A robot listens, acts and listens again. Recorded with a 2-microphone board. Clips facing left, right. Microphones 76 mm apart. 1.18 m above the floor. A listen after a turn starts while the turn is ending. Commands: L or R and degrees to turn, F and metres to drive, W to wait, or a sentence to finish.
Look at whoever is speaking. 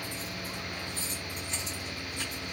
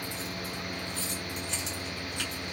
W
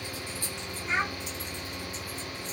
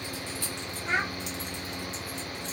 R60
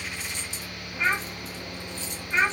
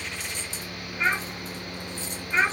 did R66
Found it: a child speaking, straight ahead.